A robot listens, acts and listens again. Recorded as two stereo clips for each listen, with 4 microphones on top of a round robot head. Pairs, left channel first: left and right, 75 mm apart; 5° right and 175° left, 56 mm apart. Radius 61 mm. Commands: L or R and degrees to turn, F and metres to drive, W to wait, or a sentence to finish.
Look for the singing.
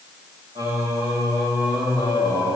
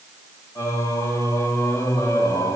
R25
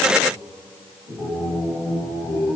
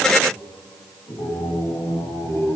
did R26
L15
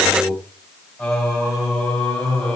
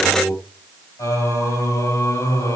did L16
L10
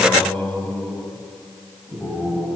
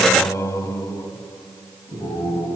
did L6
Facing the singing.